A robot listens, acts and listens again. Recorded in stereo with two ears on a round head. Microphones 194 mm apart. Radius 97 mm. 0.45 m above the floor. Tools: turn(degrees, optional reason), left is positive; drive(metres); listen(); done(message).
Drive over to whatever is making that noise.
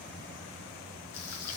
turn(degrees=90)
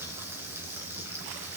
turn(degrees=-15, reason="So it is at 15° right.")
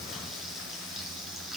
drive(metres=1.0)
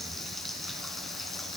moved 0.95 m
drive(metres=1.0)
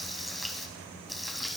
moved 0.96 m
drive(metres=1.0)
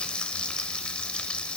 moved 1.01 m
drive(metres=1.0)
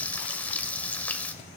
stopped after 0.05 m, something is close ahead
done("Arrived at the frying, straight ahead.")